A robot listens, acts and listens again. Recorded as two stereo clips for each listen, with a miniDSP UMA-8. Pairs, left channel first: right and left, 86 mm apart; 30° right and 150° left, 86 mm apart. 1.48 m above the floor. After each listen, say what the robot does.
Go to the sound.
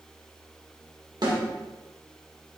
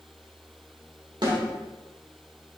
Turn 115° left.
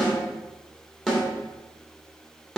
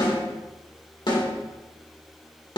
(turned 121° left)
Drive 1.0 m forward.
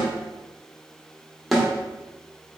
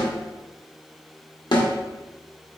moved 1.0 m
Drive 1.0 m forward.
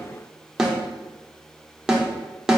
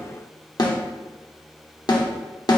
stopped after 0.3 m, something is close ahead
Turn 10° left.
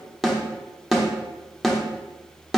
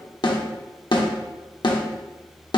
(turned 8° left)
Arrived at the snare drum, straight ahead.